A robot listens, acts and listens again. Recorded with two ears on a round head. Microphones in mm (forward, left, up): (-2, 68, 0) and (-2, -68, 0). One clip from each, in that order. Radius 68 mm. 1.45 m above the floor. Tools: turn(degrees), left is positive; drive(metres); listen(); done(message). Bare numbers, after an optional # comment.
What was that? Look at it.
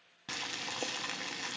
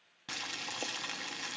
turn(-30)
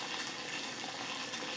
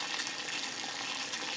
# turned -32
# So it is at 135° right.
turn(-135)
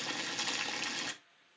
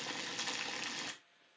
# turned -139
done("Facing the boiling, under 1 m away.")